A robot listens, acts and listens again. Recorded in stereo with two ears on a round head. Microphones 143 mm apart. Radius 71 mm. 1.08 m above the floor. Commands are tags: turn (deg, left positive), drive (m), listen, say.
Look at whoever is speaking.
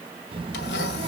<turn deg="-35"/>
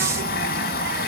<listen/>
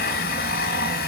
<listen/>
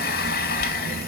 <turn deg="-110"/>
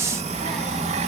<say>Found it: a child speaking, straight ahead.</say>